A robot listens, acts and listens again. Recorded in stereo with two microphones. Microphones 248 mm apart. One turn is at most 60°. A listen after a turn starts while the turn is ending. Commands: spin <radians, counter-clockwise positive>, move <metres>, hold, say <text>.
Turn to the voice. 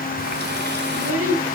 spin -1.05
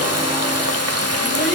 hold
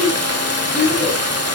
say Facing the child speaking, over 4 m away.